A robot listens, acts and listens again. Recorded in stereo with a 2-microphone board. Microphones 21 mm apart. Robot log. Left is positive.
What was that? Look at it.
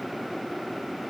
cmd idle
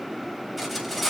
cmd yaw +30
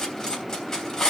note: So it is at 150° left.
cmd yaw +150
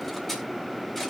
cmd idle
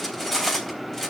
note: The cutlery clinking is now 10° left.
cmd yaw +10
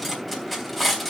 end: Facing the cutlery clinking, 2 to 4 m away.